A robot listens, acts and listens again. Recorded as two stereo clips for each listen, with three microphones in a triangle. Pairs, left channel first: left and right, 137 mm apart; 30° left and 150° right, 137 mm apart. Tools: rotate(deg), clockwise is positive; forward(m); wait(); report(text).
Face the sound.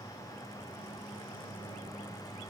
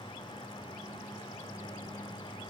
wait()
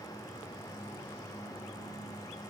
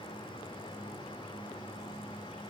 wait()
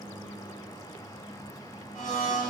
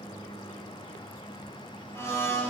rotate(-100)
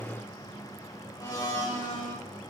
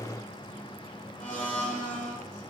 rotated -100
rotate(-30)
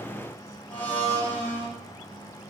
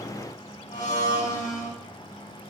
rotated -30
rotate(-15)
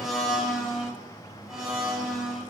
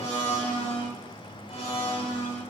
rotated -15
report("Facing the blender.")